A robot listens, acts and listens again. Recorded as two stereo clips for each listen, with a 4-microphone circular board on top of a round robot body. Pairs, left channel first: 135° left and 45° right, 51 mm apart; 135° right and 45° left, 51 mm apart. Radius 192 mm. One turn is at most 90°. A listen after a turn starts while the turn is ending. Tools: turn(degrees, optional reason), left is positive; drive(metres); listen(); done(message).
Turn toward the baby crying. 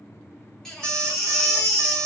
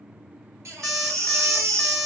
turn(degrees=50, reason="The baby crying: 50° left.")
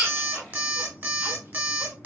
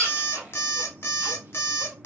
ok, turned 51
listen()
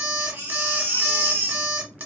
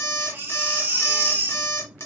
done("Facing the baby crying.")